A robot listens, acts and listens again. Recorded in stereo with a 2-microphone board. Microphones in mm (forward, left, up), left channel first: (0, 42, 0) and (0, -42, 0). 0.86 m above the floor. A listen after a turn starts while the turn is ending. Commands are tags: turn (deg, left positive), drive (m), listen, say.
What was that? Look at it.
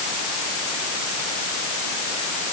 <listen/>
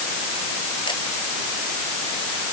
<listen/>
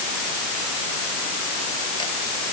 <say>I can't make out anything to turn to.</say>